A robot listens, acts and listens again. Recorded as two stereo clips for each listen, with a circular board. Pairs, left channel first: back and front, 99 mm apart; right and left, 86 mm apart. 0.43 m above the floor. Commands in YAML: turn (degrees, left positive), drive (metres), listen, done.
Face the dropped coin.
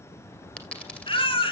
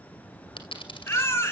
turn: -100
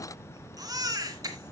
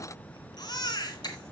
done: "I heard a dropped coin from this way, but can't make it out now."